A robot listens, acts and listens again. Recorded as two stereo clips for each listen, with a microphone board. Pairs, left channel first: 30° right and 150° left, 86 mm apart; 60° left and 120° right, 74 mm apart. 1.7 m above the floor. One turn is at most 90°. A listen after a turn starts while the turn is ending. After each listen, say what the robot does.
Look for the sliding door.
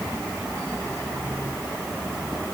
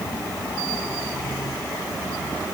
Keep listening.
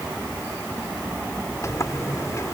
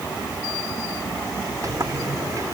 Turn 80° right.
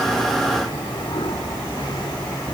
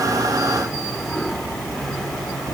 Turn 25° right.
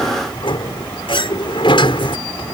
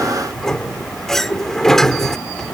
Turn 25° right.
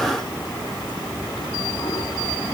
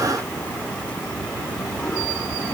Keep listening.
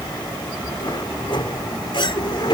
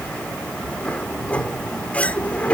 Turn 10° right.
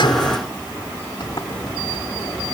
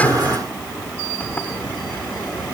Facing the sliding door.